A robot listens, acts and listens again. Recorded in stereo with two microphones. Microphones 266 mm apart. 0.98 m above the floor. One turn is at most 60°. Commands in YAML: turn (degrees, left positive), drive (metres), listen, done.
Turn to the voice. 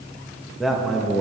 turn: 30
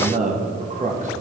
turn: -30
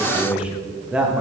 done: "Found it: a man speaking, straight ahead."